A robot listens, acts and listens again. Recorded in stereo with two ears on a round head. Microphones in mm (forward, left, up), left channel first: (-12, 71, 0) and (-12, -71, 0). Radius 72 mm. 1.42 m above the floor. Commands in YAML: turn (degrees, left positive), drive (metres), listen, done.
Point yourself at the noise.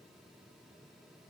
listen: true
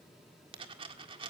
turn: -35
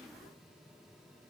listen: true
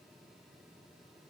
done: "I heard a dropped coin, but can't make it out now. It was about straight ahead or 110° right."